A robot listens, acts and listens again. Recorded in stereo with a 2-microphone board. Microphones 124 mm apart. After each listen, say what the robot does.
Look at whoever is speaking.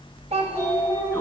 Turn 55° right.
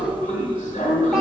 Keep listening.
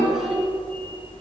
Keep listening.
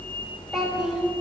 Facing the child speaking.